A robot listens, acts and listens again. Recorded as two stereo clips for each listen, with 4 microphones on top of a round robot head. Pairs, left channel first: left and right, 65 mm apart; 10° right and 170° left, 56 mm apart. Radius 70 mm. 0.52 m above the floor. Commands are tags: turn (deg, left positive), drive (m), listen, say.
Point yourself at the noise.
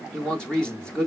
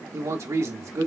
<turn deg="165"/>
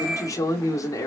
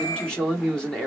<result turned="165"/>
<turn deg="65"/>
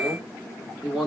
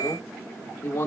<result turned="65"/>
<say>Facing the man speaking.</say>